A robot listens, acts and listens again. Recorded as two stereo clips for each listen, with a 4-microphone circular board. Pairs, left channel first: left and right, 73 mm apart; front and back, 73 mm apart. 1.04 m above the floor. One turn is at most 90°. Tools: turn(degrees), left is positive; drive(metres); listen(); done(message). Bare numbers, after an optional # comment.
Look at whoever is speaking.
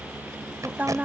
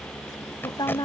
# The woman speaking: 25° right.
turn(-25)
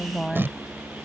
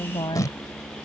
done("Found it: a woman speaking, straight ahead.")